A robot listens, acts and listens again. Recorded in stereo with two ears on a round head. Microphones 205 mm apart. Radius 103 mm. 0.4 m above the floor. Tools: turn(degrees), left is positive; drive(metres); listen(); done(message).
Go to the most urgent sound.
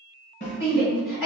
turn(degrees=60)
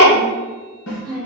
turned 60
turn(degrees=45)
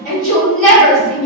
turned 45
drive(metres=1.0)
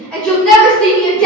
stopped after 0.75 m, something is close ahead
done("I am next to the shout.")